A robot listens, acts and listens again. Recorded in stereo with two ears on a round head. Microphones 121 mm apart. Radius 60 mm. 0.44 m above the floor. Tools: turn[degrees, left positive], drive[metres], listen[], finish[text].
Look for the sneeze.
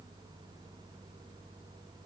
Action: listen[]
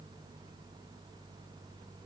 Action: listen[]
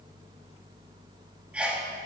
Action: turn[-30]
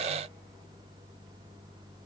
Action: listen[]
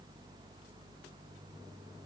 Action: finish[I heard a sneeze, but can't make it out now. It was about 20° left or 140° right.]